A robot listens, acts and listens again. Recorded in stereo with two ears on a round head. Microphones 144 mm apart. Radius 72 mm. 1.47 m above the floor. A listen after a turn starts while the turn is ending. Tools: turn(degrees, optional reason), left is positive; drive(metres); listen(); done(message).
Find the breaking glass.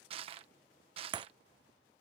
turn(degrees=-25, reason="The breaking glass: about 25° right or 155° right.")
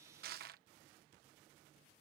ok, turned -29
listen()
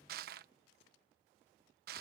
done("I heard breaking glass, but can't make it out now. It was about straight ahead or 125° right.")